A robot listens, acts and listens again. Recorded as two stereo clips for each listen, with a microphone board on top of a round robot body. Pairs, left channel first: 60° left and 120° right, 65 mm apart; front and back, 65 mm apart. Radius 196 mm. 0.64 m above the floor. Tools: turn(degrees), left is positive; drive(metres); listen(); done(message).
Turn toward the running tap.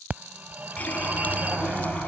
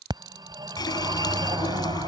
turn(degrees=-10)
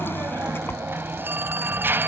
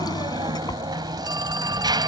listen()
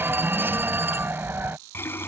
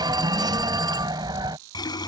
done("Found it: a running tap, straight ahead.")